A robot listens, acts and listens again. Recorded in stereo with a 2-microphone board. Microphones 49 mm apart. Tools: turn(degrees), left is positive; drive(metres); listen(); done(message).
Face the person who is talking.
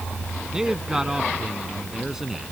turn(degrees=-30)
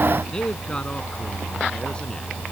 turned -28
turn(degrees=20)
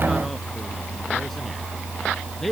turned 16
done("Facing the man speaking.")